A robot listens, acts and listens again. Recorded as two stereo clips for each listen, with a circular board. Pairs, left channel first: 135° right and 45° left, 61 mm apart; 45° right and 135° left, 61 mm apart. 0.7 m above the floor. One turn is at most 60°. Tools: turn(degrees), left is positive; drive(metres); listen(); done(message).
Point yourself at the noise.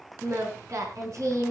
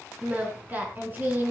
turn(degrees=60)
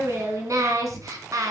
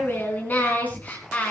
turn(degrees=25)
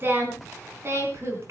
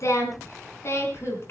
done("Found it: singing, straight ahead, 2 to 4 m away.")